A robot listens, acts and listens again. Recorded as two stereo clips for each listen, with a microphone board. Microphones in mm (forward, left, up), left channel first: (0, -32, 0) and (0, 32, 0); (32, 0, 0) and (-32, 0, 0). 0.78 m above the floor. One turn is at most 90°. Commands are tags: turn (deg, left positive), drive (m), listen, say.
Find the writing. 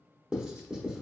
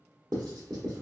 <turn deg="90"/>
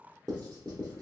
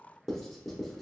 <turn deg="85"/>
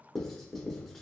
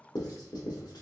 <say>Facing the writing, under 1 m away.</say>